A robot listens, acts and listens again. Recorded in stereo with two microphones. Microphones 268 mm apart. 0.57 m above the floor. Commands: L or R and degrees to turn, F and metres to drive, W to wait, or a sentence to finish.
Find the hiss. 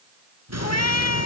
R70
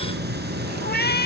R40
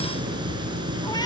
R15
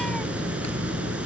Facing the hiss, over 4 m away.